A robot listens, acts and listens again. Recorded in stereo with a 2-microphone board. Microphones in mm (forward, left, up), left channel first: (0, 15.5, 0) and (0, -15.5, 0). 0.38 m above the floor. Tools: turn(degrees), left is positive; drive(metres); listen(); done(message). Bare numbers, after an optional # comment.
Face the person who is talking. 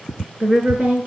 # The woman speaking: about 45° right or 135° right.
turn(-45)
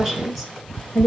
done("Found it: a woman speaking, straight ahead, over 4 m away.")